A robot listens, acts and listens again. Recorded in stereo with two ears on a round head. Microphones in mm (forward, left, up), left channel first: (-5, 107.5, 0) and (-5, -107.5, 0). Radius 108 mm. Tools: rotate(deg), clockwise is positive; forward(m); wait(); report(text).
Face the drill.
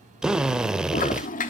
rotate(30)
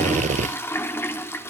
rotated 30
rotate(150)
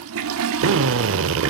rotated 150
rotate(55)
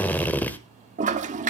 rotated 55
report("Facing the drill.")